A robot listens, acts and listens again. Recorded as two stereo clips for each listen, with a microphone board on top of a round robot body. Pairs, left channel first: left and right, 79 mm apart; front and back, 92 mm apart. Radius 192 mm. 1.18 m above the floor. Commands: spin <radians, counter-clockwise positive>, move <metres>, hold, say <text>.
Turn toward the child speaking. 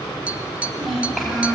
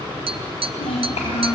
say Facing the child speaking.